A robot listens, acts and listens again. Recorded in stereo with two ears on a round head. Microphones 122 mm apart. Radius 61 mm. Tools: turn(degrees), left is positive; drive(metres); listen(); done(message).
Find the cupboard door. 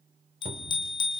turn(degrees=-45)
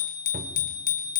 turn(degrees=-90)
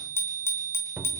turn(degrees=-10)
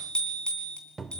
done("Found it: a cupboard door, straight ahead, 1 to 2 m away.")